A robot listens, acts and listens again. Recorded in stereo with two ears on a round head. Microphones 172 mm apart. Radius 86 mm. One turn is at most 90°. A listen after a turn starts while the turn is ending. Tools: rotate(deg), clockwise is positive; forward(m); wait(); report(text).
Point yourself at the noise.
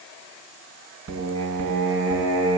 rotate(90)
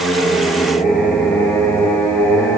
rotate(-10)
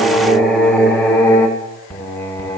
rotate(-15)
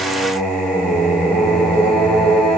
report("Found it: singing, straight ahead, 2 to 4 m away.")